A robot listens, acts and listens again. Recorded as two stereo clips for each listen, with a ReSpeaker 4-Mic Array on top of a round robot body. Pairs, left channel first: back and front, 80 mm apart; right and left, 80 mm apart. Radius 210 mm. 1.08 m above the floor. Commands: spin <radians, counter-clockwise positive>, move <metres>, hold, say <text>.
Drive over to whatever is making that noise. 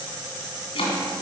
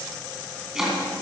spin 3.05
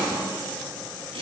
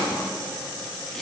move 1.0
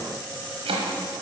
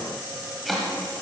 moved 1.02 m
move 1.0
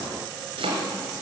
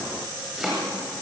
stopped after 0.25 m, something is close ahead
say I am next to the chopping.